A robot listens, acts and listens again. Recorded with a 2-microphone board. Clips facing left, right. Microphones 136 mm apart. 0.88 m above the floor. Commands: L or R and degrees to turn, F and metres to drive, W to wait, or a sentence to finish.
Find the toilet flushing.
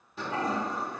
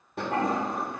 R60
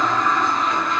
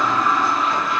Found it: a toilet flushing, straight ahead, under 1 m away.